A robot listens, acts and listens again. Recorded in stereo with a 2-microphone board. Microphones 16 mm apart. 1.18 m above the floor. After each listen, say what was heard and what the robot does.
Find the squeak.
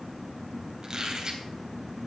The squeak: about 40° right or 140° right. Turn 40° right.
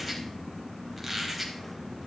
Found it: a squeak, straight ahead.